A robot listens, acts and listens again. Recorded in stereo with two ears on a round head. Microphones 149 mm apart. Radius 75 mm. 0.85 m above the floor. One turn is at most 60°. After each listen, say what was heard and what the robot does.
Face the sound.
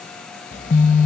The phone buzzing: about 50° left or 130° left. Turn 50° left.
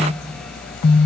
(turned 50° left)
So it is at 75° left. Turn 60° left.
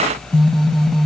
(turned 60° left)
Facing the phone buzzing.